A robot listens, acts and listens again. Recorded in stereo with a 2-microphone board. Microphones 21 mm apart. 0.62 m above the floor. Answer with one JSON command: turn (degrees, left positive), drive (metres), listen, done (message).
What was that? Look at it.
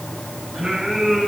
{"turn": -50}
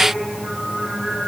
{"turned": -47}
{"turn": -60}
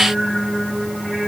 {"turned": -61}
{"done": "Facing the singing, over 4 m away."}